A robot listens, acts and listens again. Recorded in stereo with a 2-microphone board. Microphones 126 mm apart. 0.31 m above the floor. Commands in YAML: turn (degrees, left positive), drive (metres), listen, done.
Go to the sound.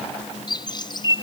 turn: 35
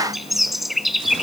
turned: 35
drive: 1.0
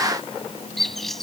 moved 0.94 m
drive: 1.0
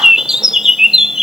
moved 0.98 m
drive: 1.0
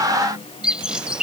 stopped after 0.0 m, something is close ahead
turn: -10
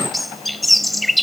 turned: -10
done: "I am next to the bird."